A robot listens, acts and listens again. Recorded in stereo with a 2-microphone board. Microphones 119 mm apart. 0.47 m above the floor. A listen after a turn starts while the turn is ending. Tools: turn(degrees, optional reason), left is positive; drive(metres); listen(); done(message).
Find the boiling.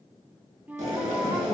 turn(degrees=-90)
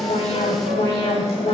listen()
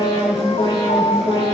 listen()
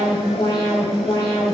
done("Facing where the boiling came from. I can't hear it now.")